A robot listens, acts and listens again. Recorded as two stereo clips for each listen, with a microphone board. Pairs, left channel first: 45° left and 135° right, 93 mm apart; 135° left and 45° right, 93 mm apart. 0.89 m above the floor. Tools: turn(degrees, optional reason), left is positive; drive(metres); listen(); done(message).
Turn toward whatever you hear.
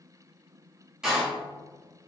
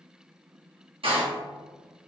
turn(degrees=-50, reason="The door slam: 50° right.")
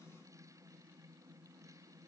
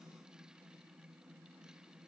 done("Facing where the door slam came from. I can't hear it now.")